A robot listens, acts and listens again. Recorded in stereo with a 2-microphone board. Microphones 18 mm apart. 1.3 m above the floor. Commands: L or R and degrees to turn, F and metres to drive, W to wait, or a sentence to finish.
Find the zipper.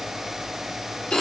W
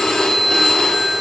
W
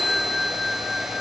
I can't make out a zipper to turn to.